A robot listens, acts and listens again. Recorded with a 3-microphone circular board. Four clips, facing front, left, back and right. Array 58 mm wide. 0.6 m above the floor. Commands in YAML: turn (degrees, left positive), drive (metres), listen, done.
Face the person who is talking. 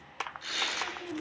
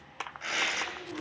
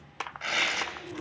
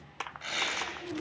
turn: -35
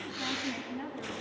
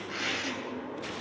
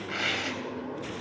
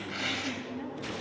turn: -20
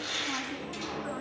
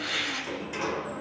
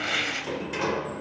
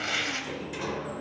listen: true
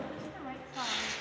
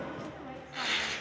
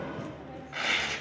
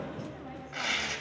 listen: true
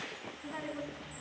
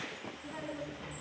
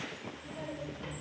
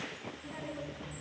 done: "Facing the woman speaking, over 4 m away."